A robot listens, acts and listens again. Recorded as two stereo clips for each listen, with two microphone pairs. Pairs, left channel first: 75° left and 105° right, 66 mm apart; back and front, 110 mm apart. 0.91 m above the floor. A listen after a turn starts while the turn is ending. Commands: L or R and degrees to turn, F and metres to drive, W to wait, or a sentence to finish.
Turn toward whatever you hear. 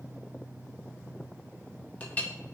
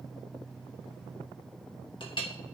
L145
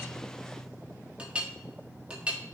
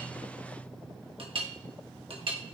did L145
R30
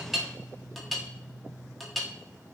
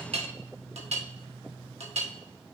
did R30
R15
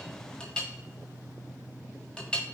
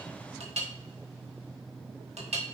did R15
Found it: a clink, straight ahead, 1 to 2 m away.